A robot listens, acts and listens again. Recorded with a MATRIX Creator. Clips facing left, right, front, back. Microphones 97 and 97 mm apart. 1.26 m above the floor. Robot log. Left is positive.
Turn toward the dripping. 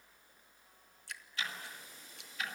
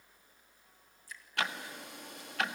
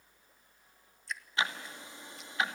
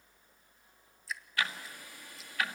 note: The dripping: 95° left.
cmd yaw +95
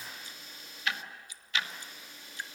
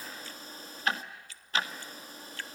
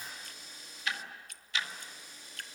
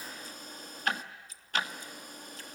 note: The dripping is now 20° left.
cmd yaw +20
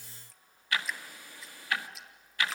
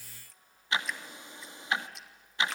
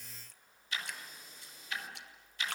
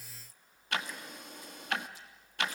end: Found it: dripping, straight ahead, 1 to 2 m away.